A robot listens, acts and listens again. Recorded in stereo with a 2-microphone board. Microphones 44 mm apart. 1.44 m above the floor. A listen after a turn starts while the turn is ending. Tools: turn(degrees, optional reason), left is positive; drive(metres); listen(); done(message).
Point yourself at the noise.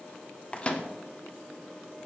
turn(degrees=30, reason="The microwave: about 30° left or 150° left.")
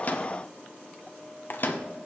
turn(degrees=120, reason="So it is at 120° left.")
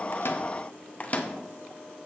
turn(degrees=35, reason="The microwave is now 35° left.")
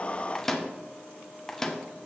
turn(degrees=10, reason="The microwave is now 10° left.")
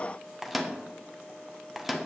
done("Found it: a microwave, straight ahead.")